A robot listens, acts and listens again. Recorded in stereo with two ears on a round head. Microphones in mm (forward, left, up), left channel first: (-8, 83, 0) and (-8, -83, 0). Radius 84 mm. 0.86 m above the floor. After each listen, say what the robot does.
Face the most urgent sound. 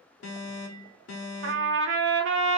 Turn 90° left.
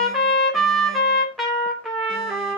Keep listening.
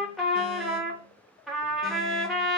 Keep listening.
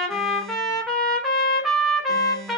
I heard an alarm from this way, but can't make it out now.